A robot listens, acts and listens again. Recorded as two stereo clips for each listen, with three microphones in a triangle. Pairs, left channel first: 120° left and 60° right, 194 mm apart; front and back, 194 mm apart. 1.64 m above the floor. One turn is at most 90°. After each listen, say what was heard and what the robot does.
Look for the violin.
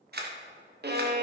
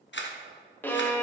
The violin: 80° right. Turn 80° right.
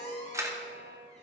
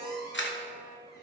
Keep listening.
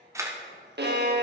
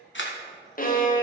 The violin is now 40° right. Turn 40° right.
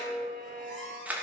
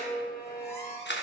Keep listening.
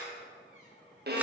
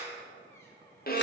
The violin is now 35° right. Turn 35° right.
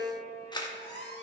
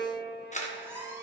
Found it: a violin, straight ahead, 1 to 2 m away.